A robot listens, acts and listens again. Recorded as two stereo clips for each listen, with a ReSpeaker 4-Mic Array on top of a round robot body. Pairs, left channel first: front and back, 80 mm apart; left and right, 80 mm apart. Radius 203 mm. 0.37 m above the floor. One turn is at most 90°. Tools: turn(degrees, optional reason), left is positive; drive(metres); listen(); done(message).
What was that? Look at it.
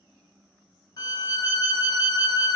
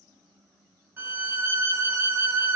turn(degrees=-30, reason="The violin: 30° right.")
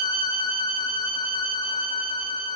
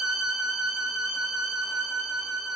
done("Found it: a violin, straight ahead, 1 to 2 m away.")